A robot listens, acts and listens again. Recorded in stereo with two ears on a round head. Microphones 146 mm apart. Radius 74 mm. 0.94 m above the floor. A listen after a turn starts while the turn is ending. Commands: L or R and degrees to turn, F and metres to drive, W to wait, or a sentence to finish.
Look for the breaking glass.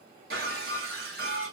R70
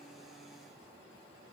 W
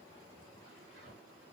I heard breaking glass, but can't make it out now. It was about straight ahead or 40° right.